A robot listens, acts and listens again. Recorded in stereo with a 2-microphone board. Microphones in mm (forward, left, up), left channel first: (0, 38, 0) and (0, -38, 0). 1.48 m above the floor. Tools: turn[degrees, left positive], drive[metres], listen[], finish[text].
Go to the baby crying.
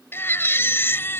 Thought: The baby crying: about 30° left or 150° left.
Action: turn[30]
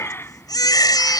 Thought: So it is at 115° left.
Action: turn[115]
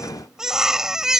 Thought: The baby crying is now 10° right.
Action: turn[-10]
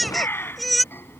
Action: drive[1.0]
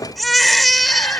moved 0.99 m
Action: drive[1.0]
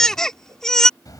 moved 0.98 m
Action: drive[1.0]
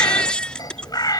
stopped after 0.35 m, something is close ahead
Thought: The baby crying is now 15° left.
Action: turn[15]
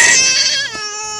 Action: finish[Arrived at the baby crying, straight ahead.]